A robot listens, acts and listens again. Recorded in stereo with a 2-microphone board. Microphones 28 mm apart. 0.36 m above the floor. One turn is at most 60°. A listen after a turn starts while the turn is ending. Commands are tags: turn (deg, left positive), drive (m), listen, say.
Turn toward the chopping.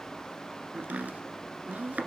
<turn deg="-60"/>
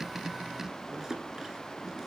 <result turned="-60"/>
<turn deg="-20"/>
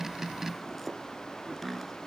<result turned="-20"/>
<say>Found it: chopping, straight ahead, 1 to 2 m away.</say>